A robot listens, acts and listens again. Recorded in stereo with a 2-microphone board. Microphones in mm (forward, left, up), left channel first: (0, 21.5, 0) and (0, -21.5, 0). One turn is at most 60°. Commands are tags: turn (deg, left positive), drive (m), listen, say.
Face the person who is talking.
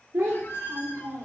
<turn deg="-60"/>
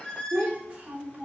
<turn deg="-30"/>
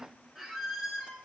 <listen/>
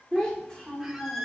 <say>Facing the child speaking, 2 to 4 m away.</say>